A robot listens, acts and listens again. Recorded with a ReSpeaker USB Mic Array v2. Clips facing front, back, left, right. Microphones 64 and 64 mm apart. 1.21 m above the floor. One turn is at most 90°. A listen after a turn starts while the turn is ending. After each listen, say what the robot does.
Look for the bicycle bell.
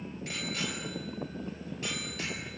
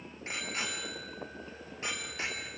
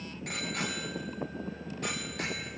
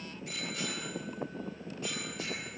Turn 90° left.
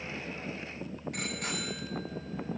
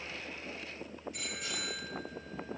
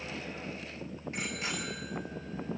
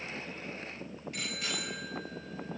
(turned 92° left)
Turn 25° left.
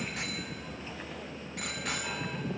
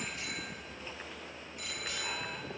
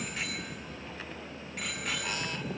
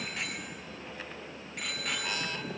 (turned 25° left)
Facing the bicycle bell.